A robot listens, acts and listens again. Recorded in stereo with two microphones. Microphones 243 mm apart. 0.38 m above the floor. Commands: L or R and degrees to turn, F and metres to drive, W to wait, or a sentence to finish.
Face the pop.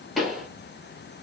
L30
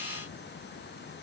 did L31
W
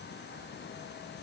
I heard a pop, but can't make it out now. It was about 30° right or 150° left.